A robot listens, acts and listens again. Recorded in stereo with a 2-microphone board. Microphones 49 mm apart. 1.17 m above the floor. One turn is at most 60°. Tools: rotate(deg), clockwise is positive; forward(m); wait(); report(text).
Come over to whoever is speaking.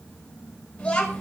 rotate(-15)
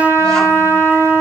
wait()
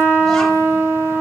wait()
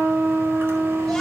report("I heard a child speaking, but can't make it out now. It was about straight ahead or 150° left. I did not reach it.")